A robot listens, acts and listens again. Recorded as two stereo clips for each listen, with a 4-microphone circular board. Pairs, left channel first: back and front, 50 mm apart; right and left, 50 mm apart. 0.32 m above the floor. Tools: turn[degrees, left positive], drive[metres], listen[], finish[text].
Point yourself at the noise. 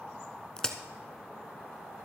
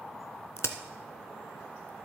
Thought: The crack: 105° right.
Action: turn[-105]
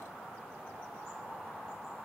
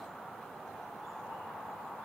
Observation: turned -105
Action: finish[I heard a crack from this way, but can't make it out now.]